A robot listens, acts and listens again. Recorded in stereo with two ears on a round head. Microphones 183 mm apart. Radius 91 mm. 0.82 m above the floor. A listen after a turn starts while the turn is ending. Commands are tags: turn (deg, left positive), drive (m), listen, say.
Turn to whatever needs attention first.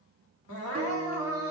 <turn deg="90"/>
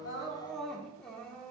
<say>Facing the crying.</say>